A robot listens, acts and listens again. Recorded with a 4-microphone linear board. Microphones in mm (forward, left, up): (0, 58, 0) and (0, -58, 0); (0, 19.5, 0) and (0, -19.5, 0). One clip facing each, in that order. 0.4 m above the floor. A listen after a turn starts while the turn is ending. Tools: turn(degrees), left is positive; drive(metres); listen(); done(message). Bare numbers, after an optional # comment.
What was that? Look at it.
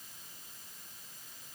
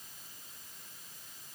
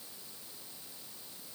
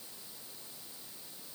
listen()
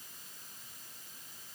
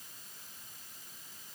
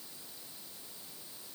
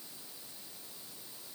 listen()
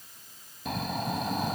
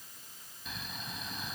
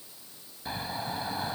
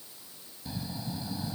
# The snoring: about 65° left or 115° left.
turn(65)
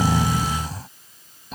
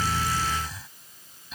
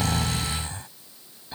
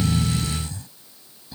# So it is at 45° left.
turn(45)
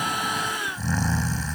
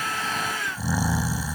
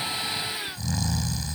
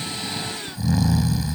# The snoring is now 10° right.
turn(-10)
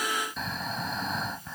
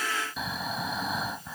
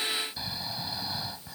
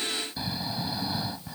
done("Facing the snoring.")